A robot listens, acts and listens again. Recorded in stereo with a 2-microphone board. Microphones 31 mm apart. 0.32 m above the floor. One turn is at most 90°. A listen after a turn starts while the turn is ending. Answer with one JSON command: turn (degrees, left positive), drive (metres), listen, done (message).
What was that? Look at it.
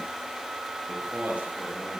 {"turn": -55}
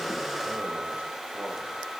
{"listen": true}
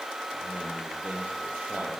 {"turn": -75}
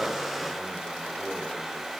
{"listen": true}
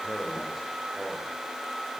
{"done": "Found it: a man speaking, straight ahead."}